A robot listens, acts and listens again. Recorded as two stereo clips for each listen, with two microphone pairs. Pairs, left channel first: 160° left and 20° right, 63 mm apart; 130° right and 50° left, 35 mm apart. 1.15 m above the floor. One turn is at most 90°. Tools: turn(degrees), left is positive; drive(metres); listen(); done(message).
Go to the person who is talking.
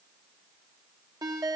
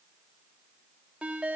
listen()
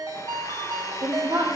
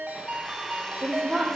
turn(degrees=-40)
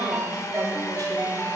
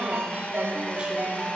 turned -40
listen()
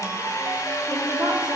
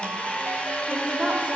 listen()
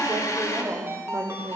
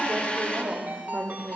drive(metres=1.0)
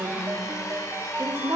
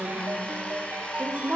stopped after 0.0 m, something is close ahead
done("Blocked. The woman speaking is further on, straight ahead.")